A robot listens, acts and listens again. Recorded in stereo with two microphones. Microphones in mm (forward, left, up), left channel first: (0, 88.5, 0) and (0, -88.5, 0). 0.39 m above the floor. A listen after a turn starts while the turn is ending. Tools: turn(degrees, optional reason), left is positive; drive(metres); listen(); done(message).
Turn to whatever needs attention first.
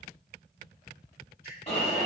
turn(degrees=35, reason="The alarm: about 35° left or 145° left.")
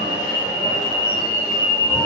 turn(degrees=105, reason="So it is at 105° left.")
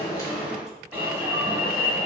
turn(degrees=-15, reason="The alarm is now 15° right.")
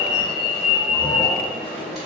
done("Facing the alarm.")